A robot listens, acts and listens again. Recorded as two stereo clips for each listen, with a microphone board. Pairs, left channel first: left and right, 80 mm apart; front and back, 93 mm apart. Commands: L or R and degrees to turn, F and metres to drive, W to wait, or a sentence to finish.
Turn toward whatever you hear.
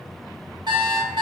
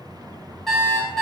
R90
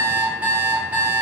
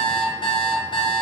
R20
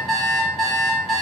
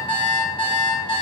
Facing the alarm clock, 1 to 2 m away.